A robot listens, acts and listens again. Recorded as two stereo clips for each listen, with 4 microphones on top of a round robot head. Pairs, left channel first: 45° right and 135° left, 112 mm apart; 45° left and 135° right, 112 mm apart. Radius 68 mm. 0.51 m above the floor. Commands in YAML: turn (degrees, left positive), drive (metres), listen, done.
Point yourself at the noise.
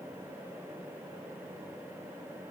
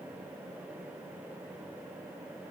listen: true
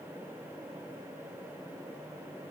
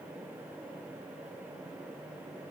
listen: true
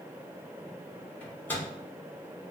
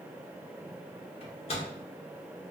turn: 25
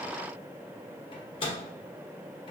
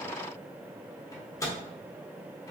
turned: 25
turn: -15
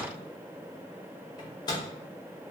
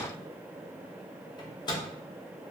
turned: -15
done: "Facing the microwave, under 1 m away."